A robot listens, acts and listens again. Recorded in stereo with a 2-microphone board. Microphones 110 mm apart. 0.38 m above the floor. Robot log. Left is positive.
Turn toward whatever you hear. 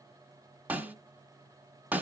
note: The snare drum: about 15° right or 165° right.
cmd yaw -15
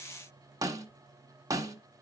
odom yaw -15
note: So it is at 150° right.
cmd yaw -150
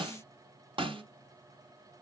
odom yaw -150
note: The snare drum is now 55° right.
cmd yaw -55
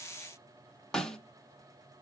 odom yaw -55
end: Facing the snare drum.